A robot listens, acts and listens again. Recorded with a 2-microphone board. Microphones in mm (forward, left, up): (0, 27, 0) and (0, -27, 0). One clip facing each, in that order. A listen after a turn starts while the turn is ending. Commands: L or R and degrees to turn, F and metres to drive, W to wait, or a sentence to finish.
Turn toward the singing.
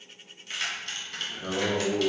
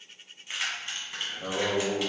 R50
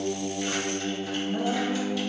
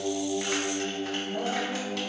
Facing the singing.